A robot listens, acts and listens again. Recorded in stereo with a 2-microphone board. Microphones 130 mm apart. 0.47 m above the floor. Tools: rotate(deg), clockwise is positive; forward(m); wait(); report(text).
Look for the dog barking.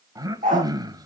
rotate(90)
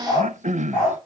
report("Found it: a dog barking, straight ahead.")